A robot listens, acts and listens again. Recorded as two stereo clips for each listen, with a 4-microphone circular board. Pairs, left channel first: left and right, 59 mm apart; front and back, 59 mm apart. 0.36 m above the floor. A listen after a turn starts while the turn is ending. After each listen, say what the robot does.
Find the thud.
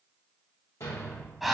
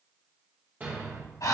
Turn 115° left.
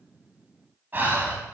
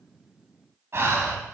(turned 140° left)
Turn 25° right.
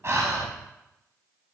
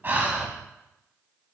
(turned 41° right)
Turn 20° left.
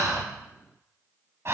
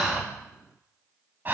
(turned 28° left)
Turn 10° right.
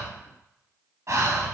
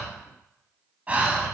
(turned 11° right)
Facing where the thud came from. I can't hear it now.